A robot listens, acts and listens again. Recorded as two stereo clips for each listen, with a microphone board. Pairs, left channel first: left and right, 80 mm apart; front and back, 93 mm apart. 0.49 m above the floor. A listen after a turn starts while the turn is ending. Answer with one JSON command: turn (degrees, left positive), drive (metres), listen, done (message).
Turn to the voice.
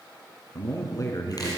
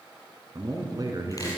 {"turn": 130}
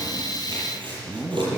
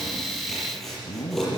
{"turn": -20}
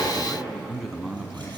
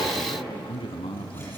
{"turn": -10}
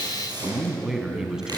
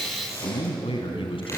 {"turn": -10}
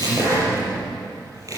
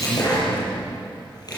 {"listen": true}
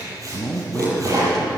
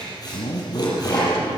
{"done": "Facing the man speaking."}